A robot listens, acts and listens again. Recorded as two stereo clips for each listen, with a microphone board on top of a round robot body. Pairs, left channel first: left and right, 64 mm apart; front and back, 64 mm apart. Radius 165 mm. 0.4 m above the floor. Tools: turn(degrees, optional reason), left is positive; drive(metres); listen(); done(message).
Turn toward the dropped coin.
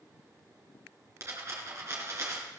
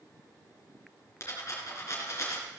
turn(degrees=-45, reason="The dropped coin: 45° right.")
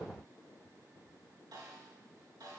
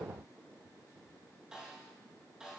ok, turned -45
done("I heard a dropped coin from this way, but can't make it out now.")